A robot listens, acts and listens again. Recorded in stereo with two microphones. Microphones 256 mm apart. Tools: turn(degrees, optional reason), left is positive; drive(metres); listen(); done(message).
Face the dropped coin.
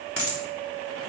turn(degrees=60, reason="The dropped coin: about 60° left or 120° left.")
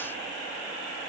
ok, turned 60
listen()
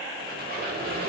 done("I heard a dropped coin, but can't make it out now. It was about straight ahead or 60° left.")